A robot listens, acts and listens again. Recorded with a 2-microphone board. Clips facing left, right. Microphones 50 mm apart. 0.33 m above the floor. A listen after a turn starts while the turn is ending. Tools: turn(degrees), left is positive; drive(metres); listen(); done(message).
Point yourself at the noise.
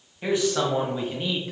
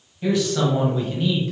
turn(degrees=15)
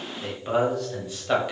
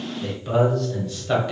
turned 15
turn(degrees=30)
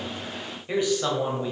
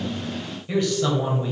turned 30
turn(degrees=30)
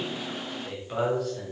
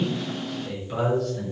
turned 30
turn(degrees=30)
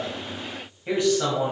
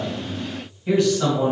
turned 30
turn(degrees=25)
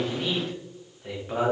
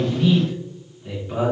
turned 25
turn(degrees=140)
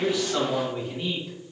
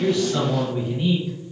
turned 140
turn(degrees=-10)
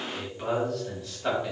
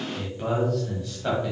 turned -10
done("Facing the man speaking, 1 to 2 m away.")